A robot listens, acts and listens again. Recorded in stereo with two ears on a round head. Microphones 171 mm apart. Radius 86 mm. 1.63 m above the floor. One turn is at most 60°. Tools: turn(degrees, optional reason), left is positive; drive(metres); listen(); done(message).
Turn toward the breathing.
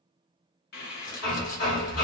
turn(degrees=55, reason="The breathing: about 55° left or 125° left.")
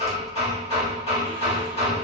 listen()
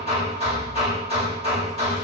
turn(degrees=60, reason="So it is at 70° left.")
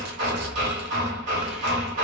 done("Facing the breathing, under 1 m away.")